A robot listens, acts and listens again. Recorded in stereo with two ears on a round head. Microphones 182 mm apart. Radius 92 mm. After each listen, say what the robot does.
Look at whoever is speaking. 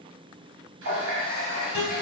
Keep listening.
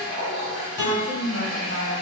Turn 60° left.
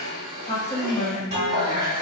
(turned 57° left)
Turn 20° left.
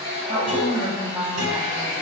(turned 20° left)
Found it: a woman speaking, straight ahead, under 1 m away.